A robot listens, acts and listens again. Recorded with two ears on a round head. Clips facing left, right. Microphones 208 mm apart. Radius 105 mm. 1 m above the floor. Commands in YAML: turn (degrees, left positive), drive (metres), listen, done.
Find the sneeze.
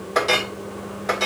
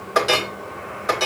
listen: true
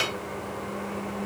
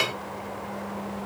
listen: true
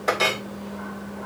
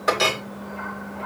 done: "I can't make out a sneeze, only a clink."